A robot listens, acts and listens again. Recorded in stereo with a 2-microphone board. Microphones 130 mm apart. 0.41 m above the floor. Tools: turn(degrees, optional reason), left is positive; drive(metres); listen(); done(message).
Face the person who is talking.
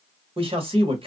turn(degrees=-45, reason="The man speaking: about 45° right or 135° right.")
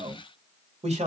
turn(degrees=-80, reason="So it is at 80° right.")
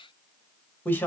turn(degrees=15, reason="The man speaking is now 15° left.")
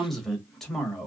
done("Facing the man speaking.")